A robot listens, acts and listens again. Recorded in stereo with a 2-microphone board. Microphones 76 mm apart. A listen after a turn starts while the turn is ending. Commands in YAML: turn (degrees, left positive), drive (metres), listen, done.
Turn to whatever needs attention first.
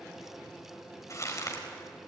listen: true
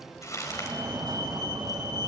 turn: -90
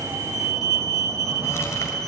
done: "Found it: a fire alarm, straight ahead, over 4 m away."